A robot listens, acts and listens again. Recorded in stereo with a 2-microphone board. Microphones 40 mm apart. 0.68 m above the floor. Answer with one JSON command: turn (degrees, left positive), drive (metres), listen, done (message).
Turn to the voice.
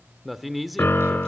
{"turn": -30}
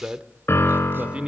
{"turn": -150}
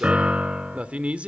{"turn": -30}
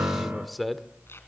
{"done": "Facing the man speaking, 1 to 2 m away."}